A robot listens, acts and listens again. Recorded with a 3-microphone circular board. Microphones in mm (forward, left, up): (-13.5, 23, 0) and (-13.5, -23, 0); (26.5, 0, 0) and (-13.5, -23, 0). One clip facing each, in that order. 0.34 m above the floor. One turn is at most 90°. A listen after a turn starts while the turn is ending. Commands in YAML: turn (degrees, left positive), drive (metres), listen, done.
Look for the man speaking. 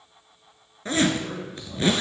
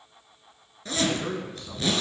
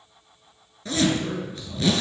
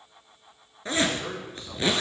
turn: -90
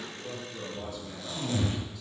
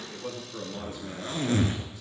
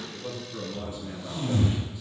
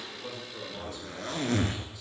turn: -35
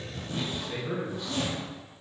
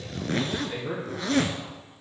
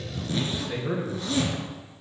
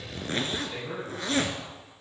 turn: -10
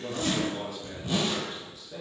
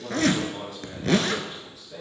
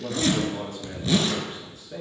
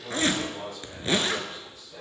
done: "Facing the man speaking, over 4 m away."